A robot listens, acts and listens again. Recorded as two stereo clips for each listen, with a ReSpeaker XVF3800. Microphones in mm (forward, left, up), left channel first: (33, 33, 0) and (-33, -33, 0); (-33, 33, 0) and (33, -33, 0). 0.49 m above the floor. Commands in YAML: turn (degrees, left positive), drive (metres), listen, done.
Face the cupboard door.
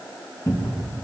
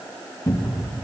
turn: 90
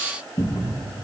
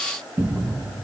turn: 15
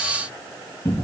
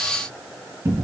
done: "Found it: a cupboard door, straight ahead, 2 to 4 m away."